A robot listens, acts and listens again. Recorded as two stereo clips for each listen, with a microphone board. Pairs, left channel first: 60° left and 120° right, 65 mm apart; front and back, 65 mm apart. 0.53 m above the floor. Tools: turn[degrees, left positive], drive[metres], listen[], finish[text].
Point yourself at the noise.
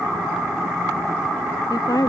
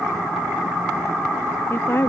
Thought: The woman speaking: 55° left.
Action: turn[55]
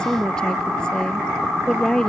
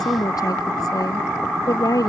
Thought: The woman speaking is now 15° right.
Action: turn[-15]
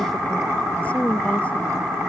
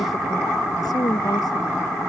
Thought: The woman speaking is now 10° right.
Action: turn[-10]
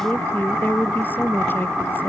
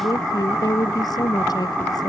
Action: finish[Facing the woman speaking.]